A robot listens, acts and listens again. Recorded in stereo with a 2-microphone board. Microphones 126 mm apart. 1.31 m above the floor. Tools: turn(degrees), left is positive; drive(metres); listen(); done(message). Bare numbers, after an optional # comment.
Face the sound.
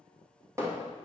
# The hammering: about 25° right or 155° right.
turn(-25)
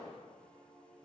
listen()
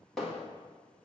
done("Found it: hammering, straight ahead, 1 to 2 m away.")